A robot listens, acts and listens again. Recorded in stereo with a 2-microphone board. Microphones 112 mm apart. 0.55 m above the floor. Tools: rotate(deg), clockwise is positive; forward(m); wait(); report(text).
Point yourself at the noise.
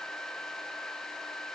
wait()
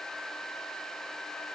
wait()
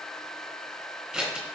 rotate(30)
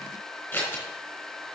rotate(-15)
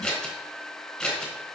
report("Facing the scissors.")